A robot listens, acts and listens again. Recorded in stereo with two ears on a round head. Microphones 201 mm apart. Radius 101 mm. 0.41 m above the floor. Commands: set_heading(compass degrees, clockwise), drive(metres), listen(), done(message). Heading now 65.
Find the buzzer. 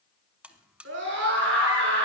set_heading(95)
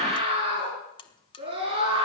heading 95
set_heading(70)
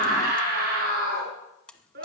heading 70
done("Facing the buzzer, 1 to 2 m away.")